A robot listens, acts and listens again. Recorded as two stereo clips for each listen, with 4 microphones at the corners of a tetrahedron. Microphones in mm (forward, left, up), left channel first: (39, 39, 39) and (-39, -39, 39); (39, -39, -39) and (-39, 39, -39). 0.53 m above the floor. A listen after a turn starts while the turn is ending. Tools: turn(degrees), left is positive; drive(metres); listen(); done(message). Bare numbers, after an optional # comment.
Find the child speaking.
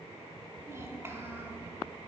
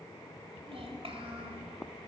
# The child speaking: 155° left.
turn(155)
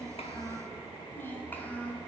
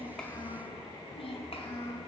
# The child speaking is now 30° right.
turn(-30)
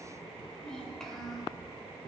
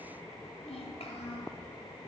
# The child speaking is now 45° right.
turn(-45)
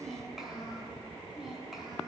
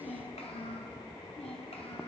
# The child speaking is now 45° right.
turn(-45)
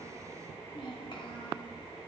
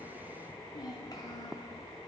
done("Found it: a child speaking, straight ahead, 2 to 4 m away.")